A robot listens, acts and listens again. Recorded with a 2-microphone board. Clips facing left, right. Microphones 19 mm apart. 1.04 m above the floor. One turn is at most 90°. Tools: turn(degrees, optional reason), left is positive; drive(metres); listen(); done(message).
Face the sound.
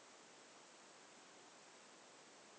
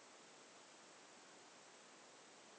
listen()
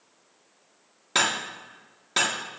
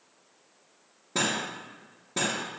turn(degrees=75, reason="The cutlery clinking: about 75° left or 105° left.")
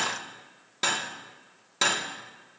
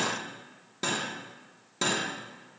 turn(degrees=30, reason="So it is at 30° left.")
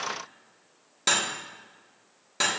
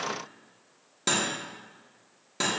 turn(degrees=15, reason="The cutlery clinking is now 15° left.")
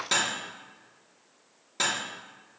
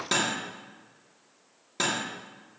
done("Facing the cutlery clinking.")